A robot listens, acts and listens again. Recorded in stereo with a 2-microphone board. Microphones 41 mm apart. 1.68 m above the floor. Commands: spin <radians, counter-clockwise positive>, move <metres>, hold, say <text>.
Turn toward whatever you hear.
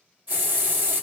spin -0.70
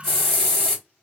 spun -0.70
say Found it: a hiss, straight ahead, 1 to 2 m away.